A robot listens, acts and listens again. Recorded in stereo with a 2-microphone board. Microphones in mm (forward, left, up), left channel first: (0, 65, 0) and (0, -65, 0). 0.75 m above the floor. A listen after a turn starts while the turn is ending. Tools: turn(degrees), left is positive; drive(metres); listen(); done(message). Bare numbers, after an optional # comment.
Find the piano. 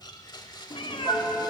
turn(-30)
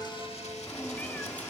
listen()
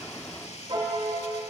# So it is at 135° right.
turn(-135)
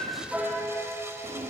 done("Facing the piano.")